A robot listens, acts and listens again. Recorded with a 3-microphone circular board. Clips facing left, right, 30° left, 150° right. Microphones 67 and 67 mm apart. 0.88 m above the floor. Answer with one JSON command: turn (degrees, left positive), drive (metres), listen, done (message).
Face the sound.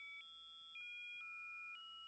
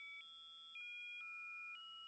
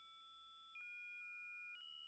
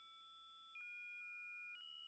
{"listen": true}
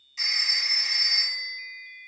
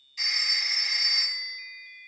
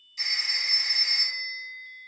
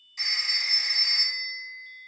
{"turn": 165}
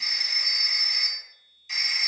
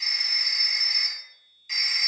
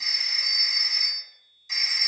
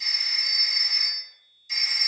{"done": "Facing the phone ringing, 1 to 2 m away."}